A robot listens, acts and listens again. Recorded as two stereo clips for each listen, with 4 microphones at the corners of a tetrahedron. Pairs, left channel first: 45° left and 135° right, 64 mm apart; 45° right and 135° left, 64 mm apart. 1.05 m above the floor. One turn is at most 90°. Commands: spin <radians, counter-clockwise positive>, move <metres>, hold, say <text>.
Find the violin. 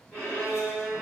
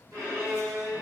spin 1.57
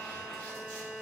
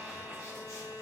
spin 0.79
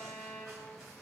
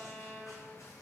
spin 0.17
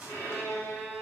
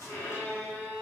say Found it: a violin, straight ahead, 1 to 2 m away.